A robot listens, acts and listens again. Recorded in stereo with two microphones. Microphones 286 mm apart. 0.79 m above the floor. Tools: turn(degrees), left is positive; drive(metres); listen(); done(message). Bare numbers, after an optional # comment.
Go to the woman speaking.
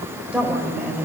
turn(-30)
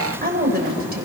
# So it is at 145° right.
turn(-145)
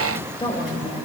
# The woman speaking is now 20° left.
turn(20)
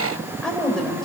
drive(1.0)
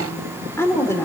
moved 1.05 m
# The woman speaking is now 10° left.
turn(10)
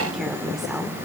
drive(1.0)
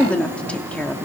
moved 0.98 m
drive(1.0)
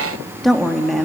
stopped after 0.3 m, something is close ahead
done("I am next to the woman speaking.")